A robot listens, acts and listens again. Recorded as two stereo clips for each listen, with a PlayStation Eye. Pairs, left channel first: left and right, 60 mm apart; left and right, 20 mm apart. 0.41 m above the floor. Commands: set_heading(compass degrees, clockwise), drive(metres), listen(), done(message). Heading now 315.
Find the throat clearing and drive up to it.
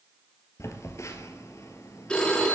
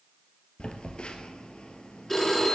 listen()
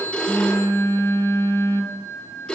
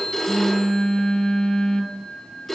listen()
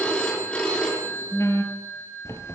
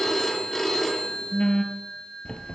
done("I can't make out throat clearing to turn to.")